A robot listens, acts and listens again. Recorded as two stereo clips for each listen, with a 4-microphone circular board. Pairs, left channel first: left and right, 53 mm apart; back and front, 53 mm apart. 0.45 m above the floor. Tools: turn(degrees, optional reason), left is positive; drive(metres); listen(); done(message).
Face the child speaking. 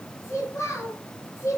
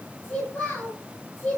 turn(degrees=120, reason="The child speaking: 120° left.")
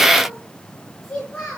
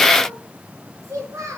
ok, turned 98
turn(degrees=20, reason="The child speaking is now 20° left.")
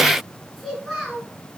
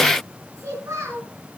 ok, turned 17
done("Facing the child speaking.")